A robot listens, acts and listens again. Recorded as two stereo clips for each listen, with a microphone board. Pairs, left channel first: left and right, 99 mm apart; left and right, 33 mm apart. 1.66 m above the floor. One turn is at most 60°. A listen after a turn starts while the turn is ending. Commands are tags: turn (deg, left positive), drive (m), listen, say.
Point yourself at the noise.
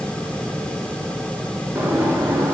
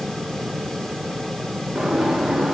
<turn deg="-15"/>
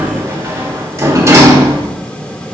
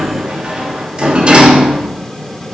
<turn deg="-60"/>
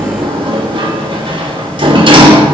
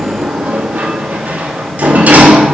<turn deg="-60"/>
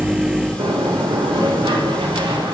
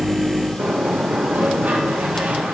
<turn deg="-60"/>
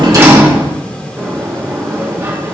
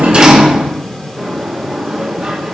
<turn deg="-30"/>
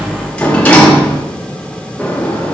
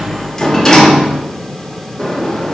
<turn deg="15"/>
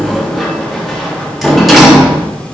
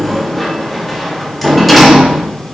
<say>Found it: a sliding door, straight ahead, 1 to 2 m away.</say>